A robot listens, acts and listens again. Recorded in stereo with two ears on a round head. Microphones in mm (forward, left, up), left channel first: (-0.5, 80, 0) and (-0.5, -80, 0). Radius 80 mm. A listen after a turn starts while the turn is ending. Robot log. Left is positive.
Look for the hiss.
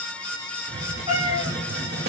note: The hiss: about 60° right or 120° right.
cmd yaw -60
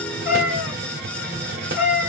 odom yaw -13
note: The hiss: about 55° right or 125° right.
cmd yaw -55
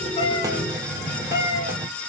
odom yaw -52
note: So it is at 20° right.
cmd yaw -20
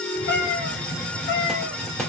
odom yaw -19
end: Found it: a hiss, straight ahead, 1 to 2 m away.